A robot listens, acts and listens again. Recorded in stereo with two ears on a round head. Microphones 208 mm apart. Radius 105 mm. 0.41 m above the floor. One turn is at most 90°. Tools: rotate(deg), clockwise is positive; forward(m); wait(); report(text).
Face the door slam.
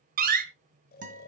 rotate(40)
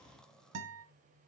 wait()
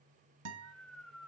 report("I heard a door slam, but can't make it out now. It was about straight ahead or 100° right.")